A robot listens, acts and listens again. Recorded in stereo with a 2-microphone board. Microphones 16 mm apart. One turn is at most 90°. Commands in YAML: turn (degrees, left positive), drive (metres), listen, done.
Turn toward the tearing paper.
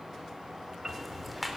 listen: true
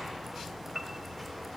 listen: true
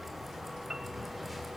done: "I can't make out tearing paper to turn to."